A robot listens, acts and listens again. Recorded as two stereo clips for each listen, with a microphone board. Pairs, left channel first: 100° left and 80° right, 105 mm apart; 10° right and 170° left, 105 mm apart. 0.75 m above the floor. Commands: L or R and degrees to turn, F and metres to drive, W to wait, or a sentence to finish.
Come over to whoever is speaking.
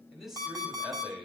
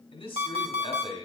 F1.0
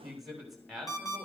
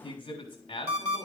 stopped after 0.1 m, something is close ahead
L10
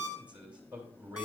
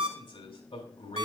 Blocked. The man speaking is further on, straight ahead.